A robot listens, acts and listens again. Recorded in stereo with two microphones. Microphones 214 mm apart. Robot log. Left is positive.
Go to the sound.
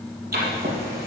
note: The writing: about 50° right or 130° right.
cmd yaw -50
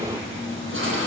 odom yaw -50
note: So it is at 80° right.
cmd yaw -80
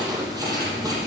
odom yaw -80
note: The writing is now 15° right.
cmd yaw -15
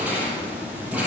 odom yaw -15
cmd fwd 1.0
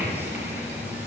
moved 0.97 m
note: The writing is now 10° right.
cmd yaw -10
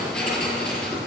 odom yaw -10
cmd fwd 1.0
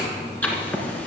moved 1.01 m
note: The writing is now 10° left.
cmd yaw +10
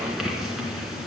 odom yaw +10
cmd fwd 1.0
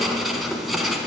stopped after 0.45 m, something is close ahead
end: Arrived at the writing, straight ahead.